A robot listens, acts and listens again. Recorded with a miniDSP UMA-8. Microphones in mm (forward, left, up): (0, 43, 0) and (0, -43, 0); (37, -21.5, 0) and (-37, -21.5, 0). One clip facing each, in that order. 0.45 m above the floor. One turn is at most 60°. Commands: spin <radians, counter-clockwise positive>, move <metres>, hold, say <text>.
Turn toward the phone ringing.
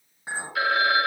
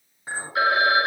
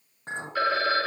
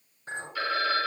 spin -0.52
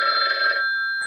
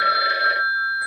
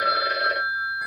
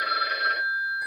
say Found it: a phone ringing, straight ahead, 1 to 2 m away.